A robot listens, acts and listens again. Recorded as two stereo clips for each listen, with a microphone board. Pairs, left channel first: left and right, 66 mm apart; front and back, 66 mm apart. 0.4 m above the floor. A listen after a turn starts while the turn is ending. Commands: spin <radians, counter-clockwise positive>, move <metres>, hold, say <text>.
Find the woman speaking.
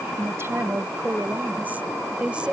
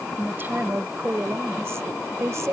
spin -2.79
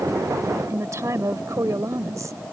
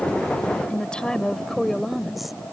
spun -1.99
spin -1.57
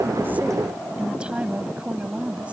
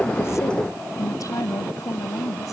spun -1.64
spin -0.35
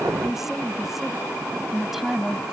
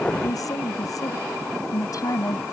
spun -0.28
say Found it: a woman speaking, straight ahead.